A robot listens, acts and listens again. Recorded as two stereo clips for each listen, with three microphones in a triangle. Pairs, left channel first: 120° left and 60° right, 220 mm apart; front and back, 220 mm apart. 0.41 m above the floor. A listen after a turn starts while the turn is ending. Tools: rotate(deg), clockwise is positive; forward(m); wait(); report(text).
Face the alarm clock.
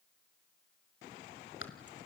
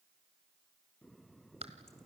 wait()
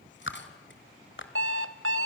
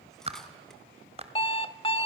rotate(65)
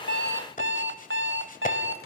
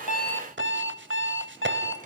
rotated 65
rotate(25)
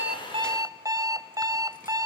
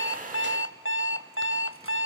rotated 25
rotate(-15)
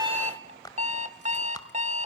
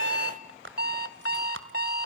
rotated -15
report("Facing the alarm clock, under 1 m away.")